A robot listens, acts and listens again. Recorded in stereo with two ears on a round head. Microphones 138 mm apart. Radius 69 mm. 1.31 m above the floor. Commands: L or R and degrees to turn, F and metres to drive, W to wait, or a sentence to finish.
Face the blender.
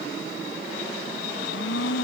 L90
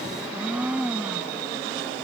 R10
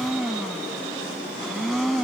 Facing the blender.